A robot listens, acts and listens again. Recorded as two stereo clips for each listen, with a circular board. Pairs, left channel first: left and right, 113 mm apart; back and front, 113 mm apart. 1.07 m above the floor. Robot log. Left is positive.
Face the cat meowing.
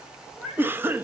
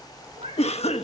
note: The cat meowing: 15° right.
cmd yaw -15
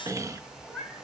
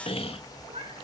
end: Found it: a cat meowing, straight ahead, over 4 m away.